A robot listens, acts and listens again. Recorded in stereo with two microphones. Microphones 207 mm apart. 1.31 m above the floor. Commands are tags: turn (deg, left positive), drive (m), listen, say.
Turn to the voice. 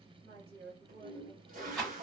<turn deg="-90"/>
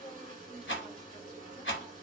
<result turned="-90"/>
<turn deg="15"/>
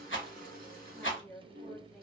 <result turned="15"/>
<say>Facing the woman speaking.</say>